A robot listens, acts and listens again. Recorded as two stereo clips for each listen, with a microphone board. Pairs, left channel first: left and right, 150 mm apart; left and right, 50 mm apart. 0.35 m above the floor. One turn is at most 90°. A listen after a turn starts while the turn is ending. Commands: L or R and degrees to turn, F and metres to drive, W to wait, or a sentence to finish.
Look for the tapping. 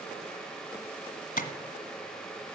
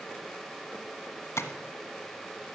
L70
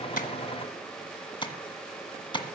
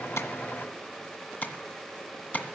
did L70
L35
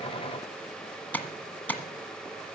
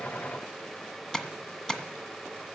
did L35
L10
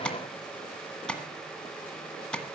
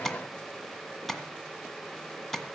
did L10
Facing the tapping, 1 to 2 m away.